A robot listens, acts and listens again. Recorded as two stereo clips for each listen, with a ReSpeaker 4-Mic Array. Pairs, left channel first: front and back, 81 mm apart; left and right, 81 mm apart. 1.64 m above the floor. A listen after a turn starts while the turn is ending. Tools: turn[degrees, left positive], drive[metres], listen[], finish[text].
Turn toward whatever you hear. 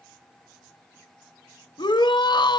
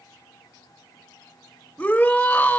Thought: The shout: 20° left.
Action: turn[20]
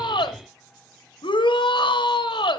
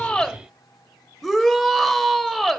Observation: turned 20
Action: finish[Found it: a shout, straight ahead, 1 to 2 m away.]